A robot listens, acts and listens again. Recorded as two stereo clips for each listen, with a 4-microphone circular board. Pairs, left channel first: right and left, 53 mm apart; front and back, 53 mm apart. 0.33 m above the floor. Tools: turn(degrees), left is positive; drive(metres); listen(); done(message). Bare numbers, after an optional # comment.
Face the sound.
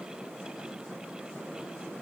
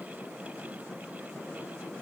listen()
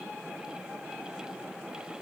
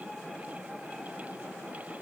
listen()
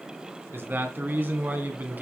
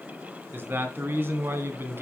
# The man speaking: 140° left.
turn(140)
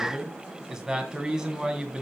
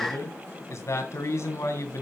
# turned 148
# The man speaking is now 10° left.
turn(10)
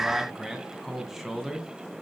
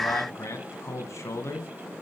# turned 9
done("Found it: a man speaking, straight ahead.")